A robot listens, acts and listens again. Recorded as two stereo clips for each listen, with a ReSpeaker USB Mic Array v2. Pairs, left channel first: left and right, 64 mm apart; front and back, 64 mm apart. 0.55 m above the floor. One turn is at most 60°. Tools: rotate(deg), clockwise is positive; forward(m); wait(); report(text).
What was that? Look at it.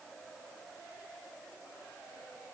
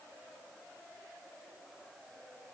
wait()
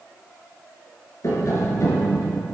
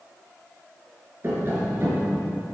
rotate(-60)
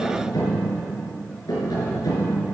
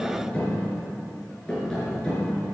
rotate(-60)
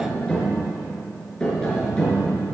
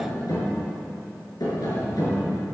rotate(-10)
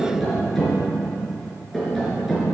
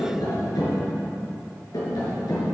report("Facing the tapping.")